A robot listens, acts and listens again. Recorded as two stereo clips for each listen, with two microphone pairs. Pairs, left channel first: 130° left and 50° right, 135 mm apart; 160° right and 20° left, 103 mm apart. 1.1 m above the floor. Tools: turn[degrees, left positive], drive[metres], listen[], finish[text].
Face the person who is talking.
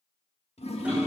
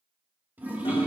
Action: listen[]
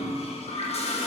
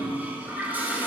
Action: listen[]
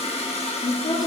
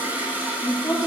Thought: The woman speaking: 150° left.
Action: turn[150]
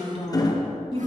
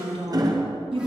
Action: finish[Found it: a woman speaking, straight ahead.]